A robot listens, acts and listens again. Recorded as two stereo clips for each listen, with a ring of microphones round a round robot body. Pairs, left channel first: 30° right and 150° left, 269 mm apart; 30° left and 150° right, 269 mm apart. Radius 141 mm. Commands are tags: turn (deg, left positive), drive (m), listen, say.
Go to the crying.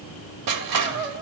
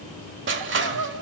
<turn deg="-165"/>
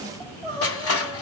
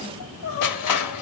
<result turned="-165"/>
<turn deg="45"/>
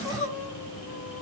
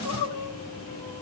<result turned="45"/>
<turn deg="15"/>
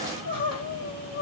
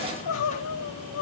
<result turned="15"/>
<drive m="1.0"/>
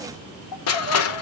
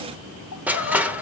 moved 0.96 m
<drive m="1.0"/>
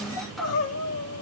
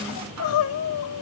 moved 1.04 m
<drive m="1.0"/>
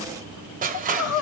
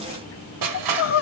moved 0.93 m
<drive m="1.0"/>
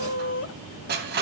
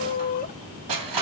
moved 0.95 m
<turn deg="-15"/>
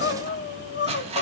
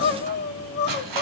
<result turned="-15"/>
<drive m="1.0"/>
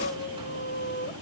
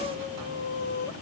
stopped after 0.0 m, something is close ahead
<say>I am next to the crying.</say>